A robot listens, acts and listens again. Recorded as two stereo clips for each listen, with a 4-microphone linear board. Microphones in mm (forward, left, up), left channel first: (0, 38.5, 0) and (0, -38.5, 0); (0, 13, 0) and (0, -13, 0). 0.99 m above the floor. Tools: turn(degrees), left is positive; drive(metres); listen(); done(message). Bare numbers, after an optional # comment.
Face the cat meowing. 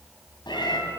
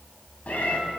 turn(90)
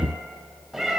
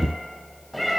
done("Facing the cat meowing, 2 to 4 m away.")